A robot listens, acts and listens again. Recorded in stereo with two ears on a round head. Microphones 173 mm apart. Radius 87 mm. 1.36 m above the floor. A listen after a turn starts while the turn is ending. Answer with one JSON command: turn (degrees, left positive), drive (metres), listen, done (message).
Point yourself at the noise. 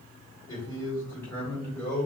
{"turn": 30}
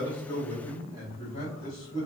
{"turn": 155}
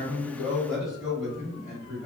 {"done": "Facing the man speaking."}